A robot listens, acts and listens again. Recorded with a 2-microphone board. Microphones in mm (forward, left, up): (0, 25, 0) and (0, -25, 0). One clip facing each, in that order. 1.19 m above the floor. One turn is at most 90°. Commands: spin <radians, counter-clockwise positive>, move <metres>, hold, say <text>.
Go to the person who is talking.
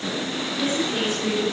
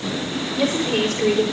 spin -1.57
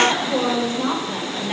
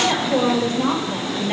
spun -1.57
move 1.0
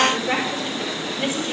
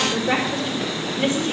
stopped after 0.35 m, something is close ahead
say Something is in my way. I am facing the woman speaking but have not reached it.